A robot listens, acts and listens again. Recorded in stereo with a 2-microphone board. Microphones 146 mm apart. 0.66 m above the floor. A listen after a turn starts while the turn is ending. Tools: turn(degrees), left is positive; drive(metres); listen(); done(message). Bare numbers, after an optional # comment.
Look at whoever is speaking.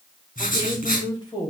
# The woman speaking: about 35° left or 145° left.
turn(35)
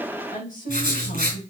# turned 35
# So it is at 105° left.
turn(105)
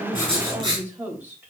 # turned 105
# The woman speaking is now 15° right.
turn(-15)
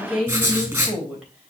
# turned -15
done("Facing the woman speaking.")